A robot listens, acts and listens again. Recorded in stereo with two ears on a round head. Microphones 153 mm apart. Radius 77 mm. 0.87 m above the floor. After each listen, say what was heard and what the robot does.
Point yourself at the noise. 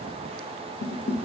The dishes clattering: about 70° left or 110° left. Turn 70° left.
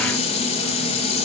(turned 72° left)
So it is at 35° left. Turn 35° left.
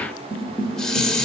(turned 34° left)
Facing the dishes clattering, 1 to 2 m away.